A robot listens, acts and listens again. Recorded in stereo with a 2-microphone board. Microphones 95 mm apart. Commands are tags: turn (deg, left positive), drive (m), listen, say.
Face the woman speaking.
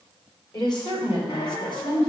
<turn deg="60"/>
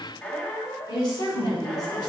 <turn deg="45"/>
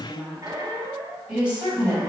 <turn deg="-15"/>
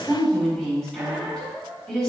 <say>Facing the woman speaking.</say>